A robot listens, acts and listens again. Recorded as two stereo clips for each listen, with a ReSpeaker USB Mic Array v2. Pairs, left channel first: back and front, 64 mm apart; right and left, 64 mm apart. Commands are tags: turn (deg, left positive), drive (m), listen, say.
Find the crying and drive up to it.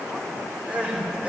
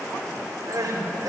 <turn deg="70"/>
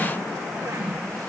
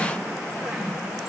<listen/>
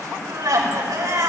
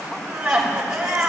<turn deg="10"/>
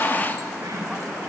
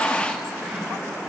<listen/>
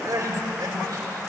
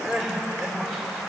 <drive m="1.0"/>
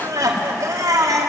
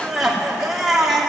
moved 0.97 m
<drive m="1.0"/>
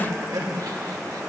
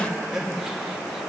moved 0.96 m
<drive m="1.0"/>
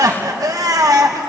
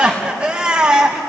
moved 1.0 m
<turn deg="15"/>
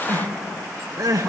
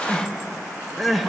<drive m="1.0"/>
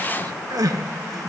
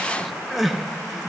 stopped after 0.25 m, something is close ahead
<say>I am next to the crying.</say>